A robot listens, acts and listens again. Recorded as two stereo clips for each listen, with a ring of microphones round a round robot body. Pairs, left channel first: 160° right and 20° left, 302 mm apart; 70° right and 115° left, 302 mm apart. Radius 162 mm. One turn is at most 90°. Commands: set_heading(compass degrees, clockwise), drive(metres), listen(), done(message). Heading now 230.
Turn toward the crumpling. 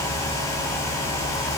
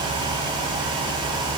listen()
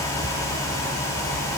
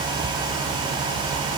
listen()
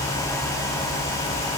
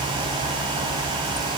done("I can't make out crumpling to turn to.")